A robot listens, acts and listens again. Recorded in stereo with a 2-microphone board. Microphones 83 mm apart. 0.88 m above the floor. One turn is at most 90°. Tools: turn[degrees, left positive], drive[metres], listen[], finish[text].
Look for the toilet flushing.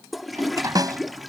Action: turn[30]
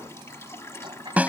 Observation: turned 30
Thought: So it is at 150° left.
Action: turn[90]
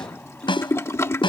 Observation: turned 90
Thought: The toilet flushing is now 35° left.
Action: turn[35]
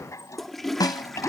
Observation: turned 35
Action: finish[Facing the toilet flushing.]